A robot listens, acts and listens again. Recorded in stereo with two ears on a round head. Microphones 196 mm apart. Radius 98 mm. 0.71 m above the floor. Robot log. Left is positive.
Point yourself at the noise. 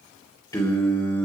cmd yaw +30
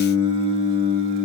note: So it is at 30° right.
cmd yaw -30
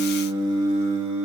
note: The singing is now 30° right.
cmd yaw -30
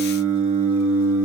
note: The singing is now 15° right.
cmd yaw -15
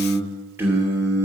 note: The singing is now 15° right.
cmd yaw -15
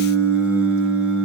end: Found it: singing, straight ahead, 2 to 4 m away.